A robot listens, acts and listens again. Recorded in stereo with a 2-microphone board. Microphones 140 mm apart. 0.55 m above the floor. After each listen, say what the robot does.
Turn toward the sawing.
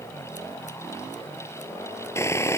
Turn 20° left.
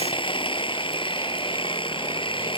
Turn 140° left.
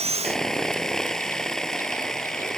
Facing the sawing.